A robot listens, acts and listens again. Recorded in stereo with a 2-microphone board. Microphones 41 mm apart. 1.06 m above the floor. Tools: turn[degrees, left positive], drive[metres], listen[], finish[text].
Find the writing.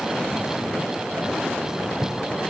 Thought: The writing: about 55° right or 125° right.
Action: turn[-55]
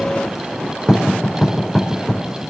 Action: finish[Facing the writing, over 4 m away.]